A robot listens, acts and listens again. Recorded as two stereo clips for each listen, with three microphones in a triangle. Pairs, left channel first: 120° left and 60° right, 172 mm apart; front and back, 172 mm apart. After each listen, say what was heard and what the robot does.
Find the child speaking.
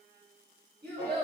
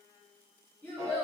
The child speaking: 80° right. Turn 80° right.
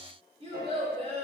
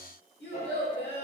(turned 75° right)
Facing the child speaking.